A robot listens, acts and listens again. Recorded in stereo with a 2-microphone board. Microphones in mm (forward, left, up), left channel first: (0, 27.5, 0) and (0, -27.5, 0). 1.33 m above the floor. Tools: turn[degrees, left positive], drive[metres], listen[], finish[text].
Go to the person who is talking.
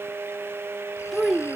Action: turn[30]
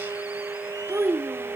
Thought: So it is at 30° right.
Action: turn[-30]
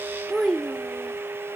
Thought: The child speaking is now 10° left.
Action: turn[10]
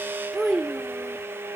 Action: drive[1.0]
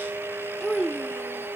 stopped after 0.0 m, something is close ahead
Action: finish[Blocked. The child speaking is further on, straight ahead.]